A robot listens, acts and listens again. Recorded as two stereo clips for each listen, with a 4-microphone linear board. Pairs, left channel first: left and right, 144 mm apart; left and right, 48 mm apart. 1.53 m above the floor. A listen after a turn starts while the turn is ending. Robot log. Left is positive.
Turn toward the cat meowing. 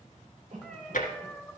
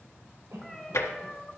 cmd yaw +30
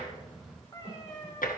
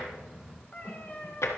note: So it is at 150° left.
cmd yaw +150
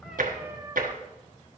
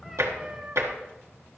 note: The cat meowing is now 25° right.
cmd yaw -25
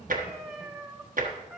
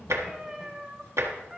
end: Found it: a cat meowing, straight ahead.